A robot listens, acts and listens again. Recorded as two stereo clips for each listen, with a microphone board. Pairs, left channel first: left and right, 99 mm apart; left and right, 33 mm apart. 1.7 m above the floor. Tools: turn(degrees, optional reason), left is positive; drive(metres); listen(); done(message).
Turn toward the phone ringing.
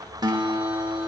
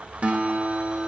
listen()
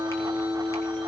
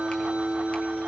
listen()
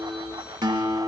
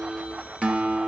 done("I can't make out a phone ringing, only a guitar.")